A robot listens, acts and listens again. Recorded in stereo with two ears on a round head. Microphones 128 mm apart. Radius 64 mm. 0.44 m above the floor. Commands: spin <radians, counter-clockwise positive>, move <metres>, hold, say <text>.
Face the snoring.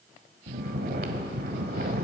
spin -1.31
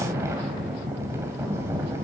spin -0.35
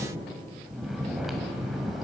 say Facing the snoring.